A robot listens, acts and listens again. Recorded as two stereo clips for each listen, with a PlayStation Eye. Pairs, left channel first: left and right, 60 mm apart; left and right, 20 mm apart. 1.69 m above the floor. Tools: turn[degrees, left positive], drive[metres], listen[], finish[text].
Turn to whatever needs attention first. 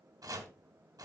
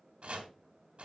Action: listen[]
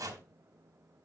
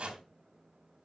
Action: listen[]
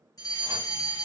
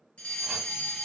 Action: turn[90]
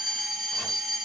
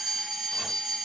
Action: finish[Found it: a fire alarm, straight ahead, 2 to 4 m away.]